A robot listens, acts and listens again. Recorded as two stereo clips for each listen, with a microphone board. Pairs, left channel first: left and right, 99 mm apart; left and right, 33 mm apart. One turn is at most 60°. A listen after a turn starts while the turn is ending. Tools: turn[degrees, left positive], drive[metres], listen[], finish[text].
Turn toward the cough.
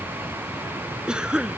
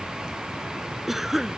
Action: turn[-30]
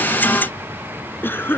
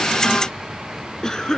Thought: So it is at 20° left.
Action: turn[20]
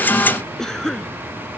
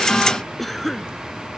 Action: finish[Found it: a cough, straight ahead.]